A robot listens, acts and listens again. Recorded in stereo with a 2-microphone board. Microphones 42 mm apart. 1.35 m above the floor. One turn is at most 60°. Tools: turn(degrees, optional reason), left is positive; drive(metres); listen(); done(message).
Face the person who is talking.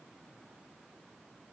listen()
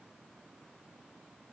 listen()
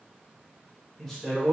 turn(degrees=30)
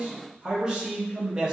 turn(degrees=-20, reason="So it is at 20° right.")
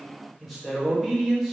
done("Facing the man speaking.")